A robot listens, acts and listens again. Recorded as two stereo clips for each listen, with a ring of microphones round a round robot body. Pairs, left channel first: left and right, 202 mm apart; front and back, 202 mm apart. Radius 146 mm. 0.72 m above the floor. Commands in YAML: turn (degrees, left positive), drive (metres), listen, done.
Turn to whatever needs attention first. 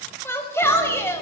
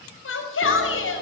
turn: 10
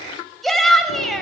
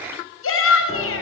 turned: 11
done: "Facing the shout, over 4 m away."